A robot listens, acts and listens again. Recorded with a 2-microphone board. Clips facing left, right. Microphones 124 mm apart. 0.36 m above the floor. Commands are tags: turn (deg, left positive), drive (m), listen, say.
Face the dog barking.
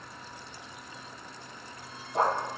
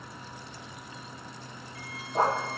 <turn deg="30"/>
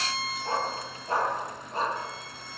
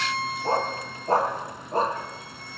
<turn deg="-40"/>
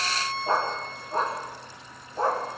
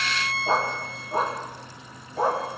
<turn deg="-10"/>
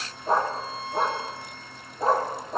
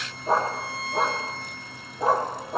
<say>Facing the dog barking, over 4 m away.</say>